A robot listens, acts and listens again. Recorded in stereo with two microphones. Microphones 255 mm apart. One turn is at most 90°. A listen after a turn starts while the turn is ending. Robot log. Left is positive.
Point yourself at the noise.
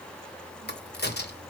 note: The crack: about 40° left or 140° left.
cmd yaw +40
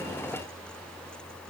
cmd idle
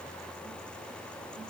end: I heard a crack, but can't make it out now. It was about straight ahead or 100° left.